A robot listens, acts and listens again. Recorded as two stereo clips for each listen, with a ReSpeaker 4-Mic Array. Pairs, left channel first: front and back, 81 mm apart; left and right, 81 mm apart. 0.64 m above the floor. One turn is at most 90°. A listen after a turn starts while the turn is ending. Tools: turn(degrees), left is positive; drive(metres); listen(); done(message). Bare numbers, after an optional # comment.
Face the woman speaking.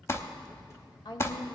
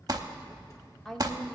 done("Found it: a woman speaking, straight ahead, 1 to 2 m away.")